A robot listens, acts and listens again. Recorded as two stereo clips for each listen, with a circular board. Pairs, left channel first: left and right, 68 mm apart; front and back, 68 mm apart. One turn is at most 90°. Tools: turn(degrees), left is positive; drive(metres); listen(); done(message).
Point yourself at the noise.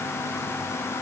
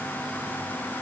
listen()
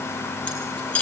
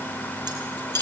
turn(degrees=90)
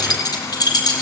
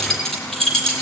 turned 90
turn(degrees=80)
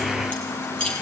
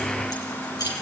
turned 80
turn(degrees=15)
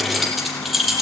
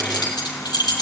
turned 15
done("Facing the keys jangling, over 4 m away.")